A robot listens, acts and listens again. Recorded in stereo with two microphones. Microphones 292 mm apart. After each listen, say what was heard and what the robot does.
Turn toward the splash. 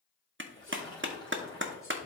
The splash: about 15° left or 165° left. Turn 15° left.
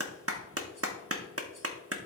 Keep listening.
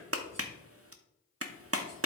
I heard a splash, but can't make it out now. It was about straight ahead or 150° left.